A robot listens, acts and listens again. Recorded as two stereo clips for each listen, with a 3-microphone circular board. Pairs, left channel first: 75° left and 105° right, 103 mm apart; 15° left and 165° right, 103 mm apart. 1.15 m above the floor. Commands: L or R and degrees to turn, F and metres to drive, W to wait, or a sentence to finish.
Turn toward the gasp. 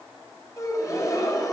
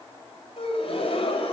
L20
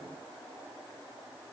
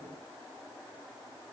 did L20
Facing where the gasp came from. I can't hear it now.